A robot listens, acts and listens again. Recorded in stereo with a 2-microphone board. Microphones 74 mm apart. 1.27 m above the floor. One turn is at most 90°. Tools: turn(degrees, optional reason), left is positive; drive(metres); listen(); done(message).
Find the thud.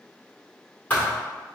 turn(degrees=20, reason="The thud: about 20° left or 160° left.")
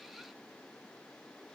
listen()
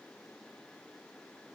done("I heard a thud, but can't make it out now. It was about straight ahead or 140° left.")